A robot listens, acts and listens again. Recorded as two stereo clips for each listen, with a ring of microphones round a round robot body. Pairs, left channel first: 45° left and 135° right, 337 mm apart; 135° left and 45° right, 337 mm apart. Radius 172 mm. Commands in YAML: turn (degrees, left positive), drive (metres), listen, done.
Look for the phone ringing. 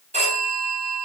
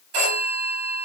turn: -65
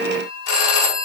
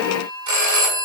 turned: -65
done: "Found it: a phone ringing, straight ahead, over 4 m away."